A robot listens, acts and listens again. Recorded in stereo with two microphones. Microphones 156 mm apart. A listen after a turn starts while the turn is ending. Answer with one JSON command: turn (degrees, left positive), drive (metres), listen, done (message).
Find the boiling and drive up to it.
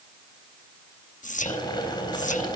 {"turn": 30}
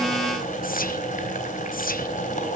{"turn": 120}
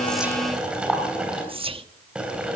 {"drive": 1.0}
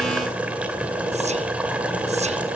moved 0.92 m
{"turn": -10}
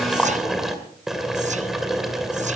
{"drive": 1.0}
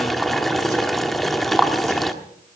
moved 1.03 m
{"drive": 1.0}
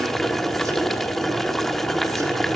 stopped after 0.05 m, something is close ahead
{"done": "I am next to the boiling."}